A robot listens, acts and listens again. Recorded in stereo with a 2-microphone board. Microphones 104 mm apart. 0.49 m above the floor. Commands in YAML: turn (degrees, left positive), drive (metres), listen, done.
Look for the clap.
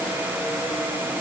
listen: true
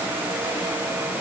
listen: true
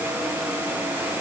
done: "I can't make out a clap."